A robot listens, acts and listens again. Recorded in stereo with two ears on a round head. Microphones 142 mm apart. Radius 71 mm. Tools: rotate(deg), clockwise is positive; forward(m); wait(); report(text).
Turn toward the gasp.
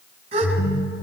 rotate(40)
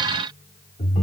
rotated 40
wait()
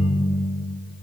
report("I heard a gasp, but can't make it out now. It was about straight ahead or 100° right.")